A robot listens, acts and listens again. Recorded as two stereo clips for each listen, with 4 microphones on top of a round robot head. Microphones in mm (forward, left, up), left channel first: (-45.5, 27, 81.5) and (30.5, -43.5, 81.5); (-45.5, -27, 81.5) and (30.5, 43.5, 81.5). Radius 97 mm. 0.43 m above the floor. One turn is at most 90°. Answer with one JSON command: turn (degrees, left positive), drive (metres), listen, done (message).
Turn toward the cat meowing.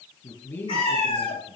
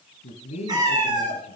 {"turn": 90}
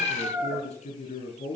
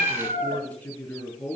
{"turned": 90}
{"turn": 15}
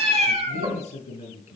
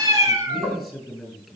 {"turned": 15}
{"turn": -20}
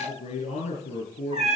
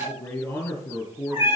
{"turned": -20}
{"turn": -25}
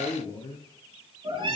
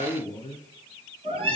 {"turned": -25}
{"done": "Found it: a cat meowing, straight ahead."}